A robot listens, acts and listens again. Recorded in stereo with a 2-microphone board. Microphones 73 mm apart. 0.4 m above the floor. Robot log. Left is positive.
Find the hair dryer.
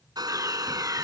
cmd yaw -90
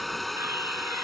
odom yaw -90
end: Facing the hair dryer.